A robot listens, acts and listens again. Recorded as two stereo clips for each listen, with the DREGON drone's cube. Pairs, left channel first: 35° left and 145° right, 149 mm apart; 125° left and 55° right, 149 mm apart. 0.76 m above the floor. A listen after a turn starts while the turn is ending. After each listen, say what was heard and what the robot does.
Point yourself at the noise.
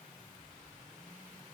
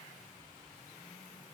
Keep listening.
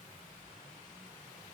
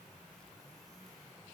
Keep listening.
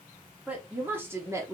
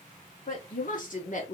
The woman speaking: 150° left. Turn 150° left.
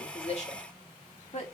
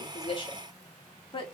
The woman speaking is now 75° left. Turn 75° left.
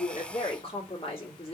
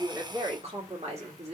The woman speaking is now 15° right. Turn 15° right.
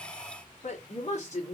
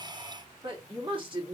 Facing the woman speaking.